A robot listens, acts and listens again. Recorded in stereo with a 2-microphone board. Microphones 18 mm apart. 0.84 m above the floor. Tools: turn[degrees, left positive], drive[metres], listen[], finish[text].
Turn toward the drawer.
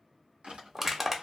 Thought: The drawer: about 75° right or 105° right.
Action: turn[-75]
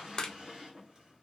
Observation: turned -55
Thought: So it is at 35° right.
Action: turn[-35]
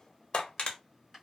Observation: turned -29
Thought: The drawer is now 10° right.
Action: turn[-10]
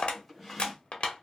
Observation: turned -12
Action: finish[Facing the drawer.]